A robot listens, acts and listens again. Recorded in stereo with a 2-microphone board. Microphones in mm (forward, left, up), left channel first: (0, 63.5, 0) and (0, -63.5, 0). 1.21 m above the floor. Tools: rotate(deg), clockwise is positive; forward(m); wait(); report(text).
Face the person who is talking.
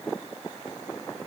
wait()
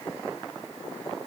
wait()
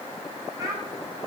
rotate(30)
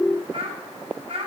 rotate(120)
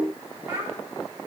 rotate(15)
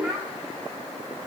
report("Facing the child speaking.")